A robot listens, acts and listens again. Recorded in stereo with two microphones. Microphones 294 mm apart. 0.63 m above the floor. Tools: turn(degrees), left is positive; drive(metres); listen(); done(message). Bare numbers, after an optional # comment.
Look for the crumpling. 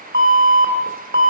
listen()
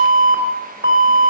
listen()
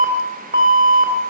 done("I can't make out crumpling to turn to.")